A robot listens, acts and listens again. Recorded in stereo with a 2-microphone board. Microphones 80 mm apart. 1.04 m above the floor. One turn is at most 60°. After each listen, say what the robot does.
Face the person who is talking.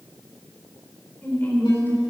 Turn 25° left.
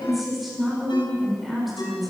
Found it: a woman speaking, straight ahead, over 4 m away.